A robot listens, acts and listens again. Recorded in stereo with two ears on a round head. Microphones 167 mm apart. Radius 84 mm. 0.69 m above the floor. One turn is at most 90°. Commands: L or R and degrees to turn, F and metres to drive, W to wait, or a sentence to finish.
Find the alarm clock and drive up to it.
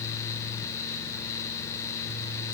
W
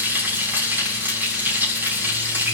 W
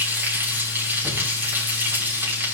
I can't make out an alarm clock, only frying.